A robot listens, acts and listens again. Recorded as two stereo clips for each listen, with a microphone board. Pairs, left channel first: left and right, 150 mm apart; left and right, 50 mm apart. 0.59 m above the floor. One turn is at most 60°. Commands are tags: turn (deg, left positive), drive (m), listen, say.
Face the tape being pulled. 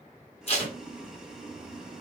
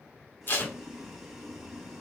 <turn deg="45"/>
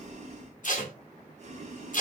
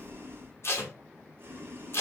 <turn deg="60"/>
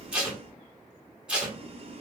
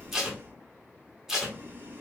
<say>Facing the tape being pulled.</say>